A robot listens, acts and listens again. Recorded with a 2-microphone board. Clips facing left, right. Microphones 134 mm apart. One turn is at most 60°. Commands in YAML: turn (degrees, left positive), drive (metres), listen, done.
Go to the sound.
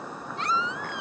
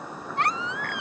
turn: -60
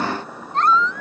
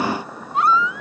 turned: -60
turn: -10
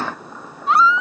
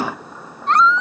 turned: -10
drive: 1.0
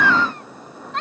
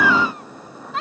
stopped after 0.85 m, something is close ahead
done: "Something is in my way. I am facing the baby crying but have not reached it."